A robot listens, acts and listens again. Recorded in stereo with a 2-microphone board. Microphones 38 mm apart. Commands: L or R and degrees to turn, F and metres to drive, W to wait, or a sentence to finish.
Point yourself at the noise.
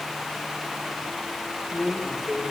R25
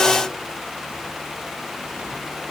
W
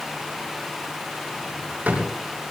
R130
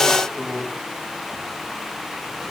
Found it: a drawer, straight ahead, over 4 m away.